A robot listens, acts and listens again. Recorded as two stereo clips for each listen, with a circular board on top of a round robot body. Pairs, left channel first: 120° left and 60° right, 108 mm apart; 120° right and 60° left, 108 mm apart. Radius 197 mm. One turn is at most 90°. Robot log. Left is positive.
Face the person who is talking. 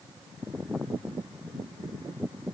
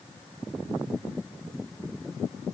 cmd idle
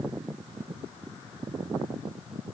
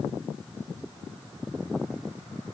cmd idle
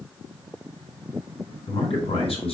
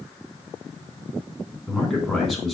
note: The man speaking: 155° left.
cmd yaw +90
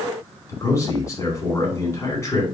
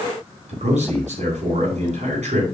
note: The man speaking is now 60° left.
cmd yaw +60
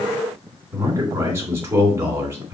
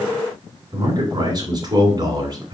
note: The man speaking is now 10° left.
cmd yaw +10
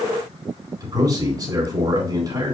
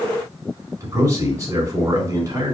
end: Facing the man speaking, over 4 m away.